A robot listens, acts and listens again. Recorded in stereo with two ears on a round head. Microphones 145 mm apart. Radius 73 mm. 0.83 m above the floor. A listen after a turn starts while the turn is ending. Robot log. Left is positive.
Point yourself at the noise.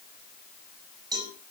note: The cowbell: about 25° right or 155° right.
cmd yaw -25
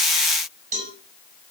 note: So it is at 135° right.
cmd yaw -135
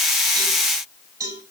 note: The cowbell is now 20° right.
cmd yaw -20
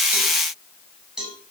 end: Found it: a cowbell, straight ahead, over 4 m away.